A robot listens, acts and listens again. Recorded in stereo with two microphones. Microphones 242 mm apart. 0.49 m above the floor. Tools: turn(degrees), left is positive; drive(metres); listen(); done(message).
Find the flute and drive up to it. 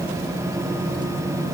listen()
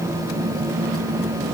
listen()
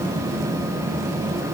done("I can't make out a flute.")